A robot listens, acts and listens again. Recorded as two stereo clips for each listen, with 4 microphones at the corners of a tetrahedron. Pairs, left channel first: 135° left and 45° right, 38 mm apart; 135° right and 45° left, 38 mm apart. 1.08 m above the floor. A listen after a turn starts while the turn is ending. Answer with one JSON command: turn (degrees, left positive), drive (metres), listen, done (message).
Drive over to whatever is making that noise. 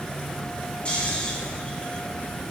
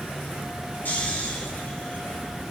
{"turn": -165}
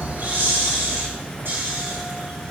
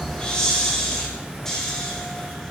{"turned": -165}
{"turn": -60}
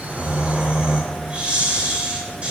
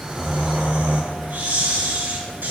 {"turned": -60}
{"turn": 10}
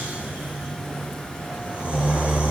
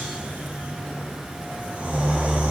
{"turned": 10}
{"drive": 1.0}
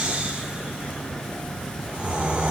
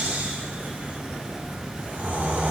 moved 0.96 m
{"turn": 10}
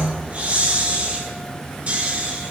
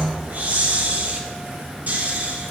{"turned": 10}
{"drive": 1.0}
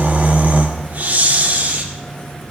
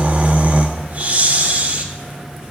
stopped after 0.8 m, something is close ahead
{"done": "Arrived at the snoring, straight ahead."}